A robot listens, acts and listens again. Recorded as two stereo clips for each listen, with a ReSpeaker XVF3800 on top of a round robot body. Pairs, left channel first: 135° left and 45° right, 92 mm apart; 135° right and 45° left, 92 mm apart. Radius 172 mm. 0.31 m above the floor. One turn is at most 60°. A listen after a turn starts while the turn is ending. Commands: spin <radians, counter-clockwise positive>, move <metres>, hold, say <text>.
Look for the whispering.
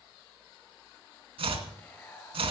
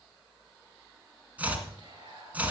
spin 1.05
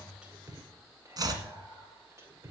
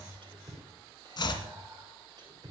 spin 0.17
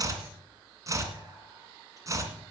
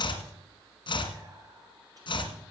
hold
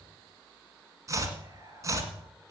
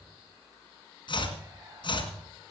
hold
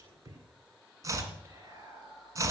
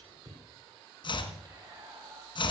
say Facing the whispering, 2 to 4 m away.